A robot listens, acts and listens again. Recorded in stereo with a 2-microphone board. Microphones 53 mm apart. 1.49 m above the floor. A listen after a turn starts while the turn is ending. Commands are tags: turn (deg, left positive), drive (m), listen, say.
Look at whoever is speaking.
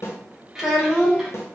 <turn deg="-30"/>
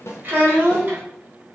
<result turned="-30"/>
<turn deg="-140"/>
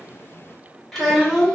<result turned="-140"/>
<say>Found it: a child speaking, straight ahead.</say>